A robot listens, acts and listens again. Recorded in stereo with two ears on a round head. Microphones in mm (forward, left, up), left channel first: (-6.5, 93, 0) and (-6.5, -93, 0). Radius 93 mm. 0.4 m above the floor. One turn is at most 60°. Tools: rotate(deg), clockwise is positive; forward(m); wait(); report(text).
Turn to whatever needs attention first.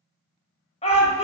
rotate(-30)
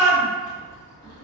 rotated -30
rotate(-60)
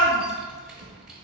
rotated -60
rotate(-40)
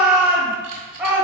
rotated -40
report("Found it: a shout, straight ahead.")